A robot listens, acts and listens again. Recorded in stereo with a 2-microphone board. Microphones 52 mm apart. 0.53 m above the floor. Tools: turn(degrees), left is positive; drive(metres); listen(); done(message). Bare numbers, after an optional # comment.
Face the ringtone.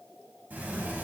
listen()
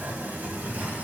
listen()
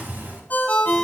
# The ringtone: about 35° left or 145° left.
turn(35)
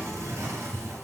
listen()
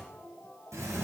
listen()
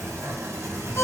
done("I heard a ringtone, but can't make it out now. It was about straight ahead or 110° left.")